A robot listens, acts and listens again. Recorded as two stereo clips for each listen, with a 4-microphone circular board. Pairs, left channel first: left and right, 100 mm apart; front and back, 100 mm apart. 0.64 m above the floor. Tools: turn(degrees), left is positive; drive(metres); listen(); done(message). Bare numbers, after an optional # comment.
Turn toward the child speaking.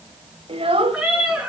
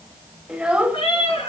# The child speaking: 105° right.
turn(-105)
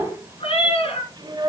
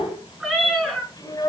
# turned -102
# The child speaking is now 50° right.
turn(-50)
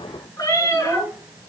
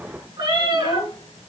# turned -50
# The child speaking is now 20° right.
turn(-20)
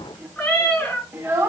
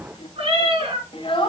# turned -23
# The child speaking is now 15° right.
turn(-15)
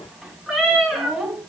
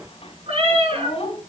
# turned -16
done("Found it: a child speaking, straight ahead, 2 to 4 m away.")